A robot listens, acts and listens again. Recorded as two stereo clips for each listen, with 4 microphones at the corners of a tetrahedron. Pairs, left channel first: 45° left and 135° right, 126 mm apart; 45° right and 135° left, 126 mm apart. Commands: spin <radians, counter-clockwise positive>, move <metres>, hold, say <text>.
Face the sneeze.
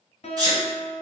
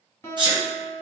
spin 3.05
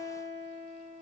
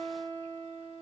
say I heard a sneeze from this way, but can't make it out now.